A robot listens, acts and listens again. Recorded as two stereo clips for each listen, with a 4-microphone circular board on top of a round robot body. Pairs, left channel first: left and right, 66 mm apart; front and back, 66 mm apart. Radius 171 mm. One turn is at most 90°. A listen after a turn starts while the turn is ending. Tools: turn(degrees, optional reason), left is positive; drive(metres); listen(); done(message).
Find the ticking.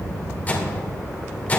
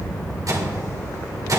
listen()
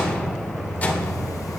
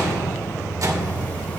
listen()
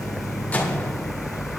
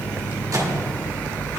done("I can't make out ticking to turn to.")